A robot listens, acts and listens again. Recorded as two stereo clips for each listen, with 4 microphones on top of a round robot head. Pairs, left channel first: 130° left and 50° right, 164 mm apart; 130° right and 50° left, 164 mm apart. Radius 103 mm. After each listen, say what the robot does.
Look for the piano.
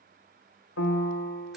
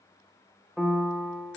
Turn 140° left.
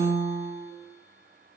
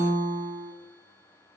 Found it: a piano, straight ahead, under 1 m away.